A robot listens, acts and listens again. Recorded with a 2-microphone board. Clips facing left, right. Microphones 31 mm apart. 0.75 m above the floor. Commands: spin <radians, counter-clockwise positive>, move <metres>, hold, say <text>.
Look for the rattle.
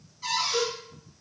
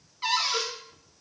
hold
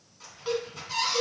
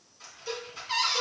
spin -0.52
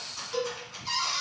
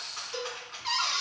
spin -2.53
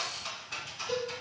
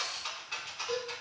spin -0.35
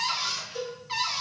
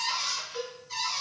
hold
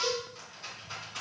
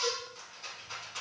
say Facing the rattle.